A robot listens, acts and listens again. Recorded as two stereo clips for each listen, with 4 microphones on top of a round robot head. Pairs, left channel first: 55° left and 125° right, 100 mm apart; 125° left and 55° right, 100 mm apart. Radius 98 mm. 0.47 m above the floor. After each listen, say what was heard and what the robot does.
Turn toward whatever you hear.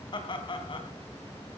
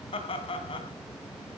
The laughter: 95° left. Turn 95° left.
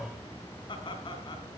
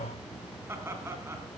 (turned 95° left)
The laughter is now 10° left. Turn 10° left.
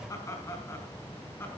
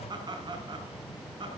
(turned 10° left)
The laughter is now 10° right. Turn 10° right.
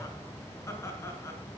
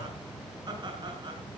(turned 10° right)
The laughter is now 10° right. Turn 10° right.
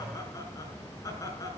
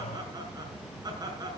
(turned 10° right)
Facing the laughter, over 4 m away.